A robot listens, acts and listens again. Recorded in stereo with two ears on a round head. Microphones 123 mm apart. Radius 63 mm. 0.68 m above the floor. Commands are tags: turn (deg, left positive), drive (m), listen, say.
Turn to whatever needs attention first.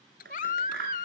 <turn deg="55"/>
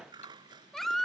<say>Facing the baby crying.</say>